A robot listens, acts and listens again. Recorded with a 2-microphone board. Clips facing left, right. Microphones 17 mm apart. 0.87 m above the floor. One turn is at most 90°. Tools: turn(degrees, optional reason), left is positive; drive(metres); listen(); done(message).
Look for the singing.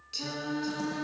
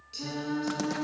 turn(degrees=20, reason="The singing: about 20° left or 160° left.")
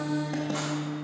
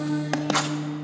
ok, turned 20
turn(degrees=-10, reason="So it is at 10° right.")
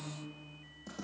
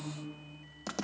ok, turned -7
done("Found it: singing, straight ahead, 2 to 4 m away.")